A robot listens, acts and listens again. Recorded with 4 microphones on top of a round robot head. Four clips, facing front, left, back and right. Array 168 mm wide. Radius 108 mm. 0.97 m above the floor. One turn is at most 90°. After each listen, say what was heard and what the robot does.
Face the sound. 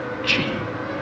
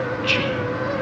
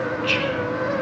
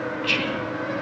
Facing the whispering.